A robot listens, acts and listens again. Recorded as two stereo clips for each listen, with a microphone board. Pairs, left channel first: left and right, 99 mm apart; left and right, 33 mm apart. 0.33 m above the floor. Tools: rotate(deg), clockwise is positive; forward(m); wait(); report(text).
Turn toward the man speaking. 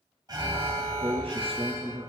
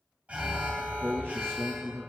rotate(90)
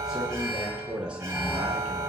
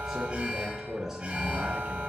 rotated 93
rotate(10)
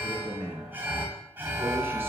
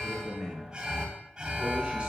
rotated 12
rotate(15)
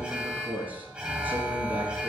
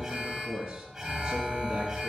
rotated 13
rotate(20)
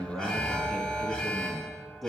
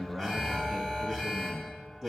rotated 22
report("Facing the man speaking.")